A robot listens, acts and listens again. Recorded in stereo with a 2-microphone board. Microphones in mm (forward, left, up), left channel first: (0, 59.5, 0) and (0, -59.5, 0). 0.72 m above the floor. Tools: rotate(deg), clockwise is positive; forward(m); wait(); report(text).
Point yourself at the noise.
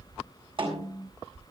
rotate(45)
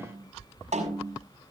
rotate(85)
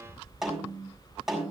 report("Found it: a snare drum, straight ahead.")